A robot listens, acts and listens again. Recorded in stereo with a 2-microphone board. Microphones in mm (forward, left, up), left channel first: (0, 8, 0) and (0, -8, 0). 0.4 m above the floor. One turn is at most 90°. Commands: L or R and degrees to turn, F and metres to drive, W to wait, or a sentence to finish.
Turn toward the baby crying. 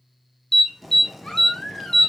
L55
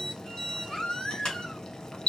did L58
L55
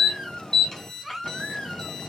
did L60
Found it: a baby crying, straight ahead.